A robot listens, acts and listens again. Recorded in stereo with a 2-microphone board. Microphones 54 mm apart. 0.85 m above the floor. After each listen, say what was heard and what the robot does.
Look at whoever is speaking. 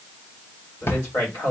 The man speaking: about 55° left or 125° left. Turn 55° left.
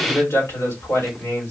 So it is at 65° left. Turn 65° left.
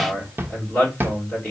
The man speaking is now 25° left. Turn 25° left.
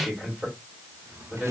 Found it: a man speaking, straight ahead, 2 to 4 m away.